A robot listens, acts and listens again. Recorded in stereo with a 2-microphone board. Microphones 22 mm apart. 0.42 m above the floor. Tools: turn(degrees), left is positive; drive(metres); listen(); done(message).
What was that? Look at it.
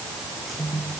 listen()
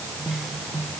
listen()
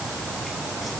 done("I can't make out anything to turn to.")